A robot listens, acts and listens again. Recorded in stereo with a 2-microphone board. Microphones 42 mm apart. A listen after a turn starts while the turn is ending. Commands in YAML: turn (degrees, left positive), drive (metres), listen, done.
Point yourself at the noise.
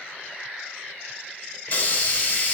turn: 40
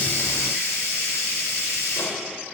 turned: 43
turn: 95
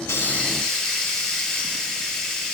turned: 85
turn: 10
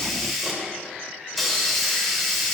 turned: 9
done: "Facing the hiss."